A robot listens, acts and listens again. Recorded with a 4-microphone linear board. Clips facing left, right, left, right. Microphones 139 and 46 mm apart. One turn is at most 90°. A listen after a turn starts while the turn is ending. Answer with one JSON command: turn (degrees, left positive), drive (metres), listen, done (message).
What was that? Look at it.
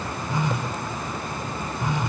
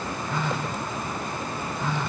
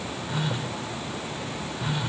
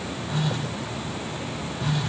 {"turn": 15}
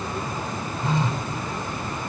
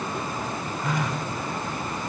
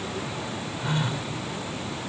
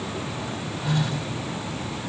{"turn": 90}
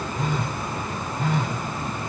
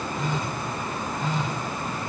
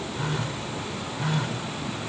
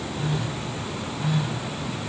{"turn": 80}
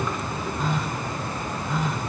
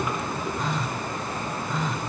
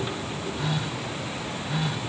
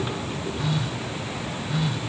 {"done": "Found it: a phone buzzing, straight ahead, 1 to 2 m away."}